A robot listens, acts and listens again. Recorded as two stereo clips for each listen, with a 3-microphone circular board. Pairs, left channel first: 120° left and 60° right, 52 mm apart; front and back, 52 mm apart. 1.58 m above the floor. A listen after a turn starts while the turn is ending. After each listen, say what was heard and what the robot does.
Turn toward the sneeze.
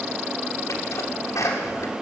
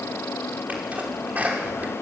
The sneeze: 120° left. Turn 120° left.
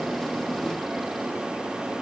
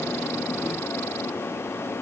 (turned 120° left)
Facing where the sneeze came from. I can't hear it now.